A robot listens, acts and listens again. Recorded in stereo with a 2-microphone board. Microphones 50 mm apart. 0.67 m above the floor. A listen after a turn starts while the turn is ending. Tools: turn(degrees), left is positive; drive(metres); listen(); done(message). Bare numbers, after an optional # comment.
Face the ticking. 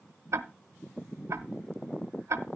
# The ticking: about 65° right or 115° right.
turn(-65)
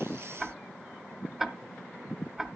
done("Facing the ticking.")